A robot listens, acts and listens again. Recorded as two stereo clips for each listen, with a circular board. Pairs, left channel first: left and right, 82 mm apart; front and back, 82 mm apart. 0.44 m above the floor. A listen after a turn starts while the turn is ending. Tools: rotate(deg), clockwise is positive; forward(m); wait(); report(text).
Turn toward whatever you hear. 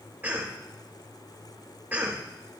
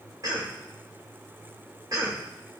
rotate(155)
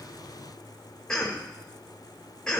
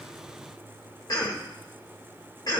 rotate(-10)
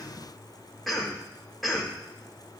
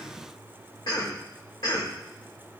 report("Found it: a cough, straight ahead, 1 to 2 m away.")